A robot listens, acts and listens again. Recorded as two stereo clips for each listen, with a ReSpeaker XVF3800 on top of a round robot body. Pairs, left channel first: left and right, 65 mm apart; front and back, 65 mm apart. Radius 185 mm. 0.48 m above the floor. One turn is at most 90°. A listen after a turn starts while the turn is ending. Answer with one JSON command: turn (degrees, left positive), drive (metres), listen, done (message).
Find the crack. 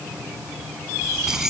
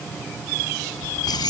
{"listen": true}
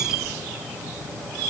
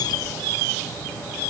{"listen": true}
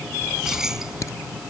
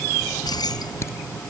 {"turn": 50}
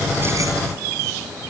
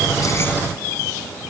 {"done": "Facing where the crack came from. I can't hear it now."}